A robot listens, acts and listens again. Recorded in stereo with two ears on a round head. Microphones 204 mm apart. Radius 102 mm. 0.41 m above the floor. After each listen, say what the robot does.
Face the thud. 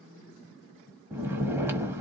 Keep listening.
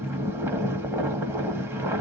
Keep listening.
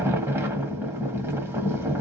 I can't make out a thud, only snoring.